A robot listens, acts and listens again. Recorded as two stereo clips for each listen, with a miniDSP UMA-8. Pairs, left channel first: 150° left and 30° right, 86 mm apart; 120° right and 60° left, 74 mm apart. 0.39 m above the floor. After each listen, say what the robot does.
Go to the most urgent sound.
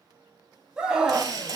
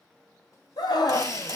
Turn 110° right.
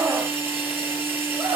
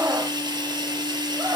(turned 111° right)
Drive 1.0 m forward.
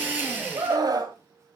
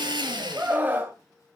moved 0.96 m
Drive 1.0 m forward.
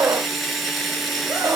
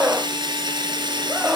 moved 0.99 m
Drive 1.0 m forward.
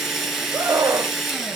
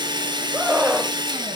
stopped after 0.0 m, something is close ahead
Arrived at the scream, straight ahead.